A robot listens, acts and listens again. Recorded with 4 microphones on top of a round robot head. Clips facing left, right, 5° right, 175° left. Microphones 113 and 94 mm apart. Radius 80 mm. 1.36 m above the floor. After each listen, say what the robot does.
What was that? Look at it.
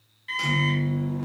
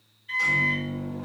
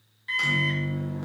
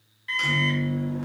Turn 75° left.
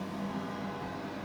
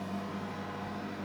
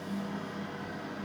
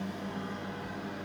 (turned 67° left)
Found it: a microwave, straight ahead.